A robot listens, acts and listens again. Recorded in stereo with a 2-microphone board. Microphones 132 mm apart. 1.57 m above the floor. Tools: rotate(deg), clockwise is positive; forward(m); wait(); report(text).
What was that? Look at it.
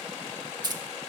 rotate(30)
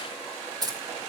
rotate(30)
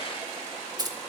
rotate(30)
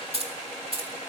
rotate(135)
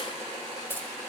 rotate(-15)
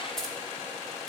report("Facing the keys jangling, 2 to 4 m away.")